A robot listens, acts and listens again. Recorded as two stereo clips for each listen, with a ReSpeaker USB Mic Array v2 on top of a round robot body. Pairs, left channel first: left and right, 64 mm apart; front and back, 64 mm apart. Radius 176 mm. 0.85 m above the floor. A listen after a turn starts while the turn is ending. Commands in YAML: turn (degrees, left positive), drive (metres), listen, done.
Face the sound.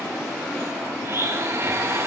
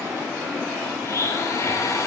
turn: -45
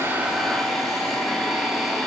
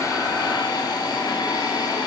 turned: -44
done: "Found it: a blender, straight ahead, over 4 m away."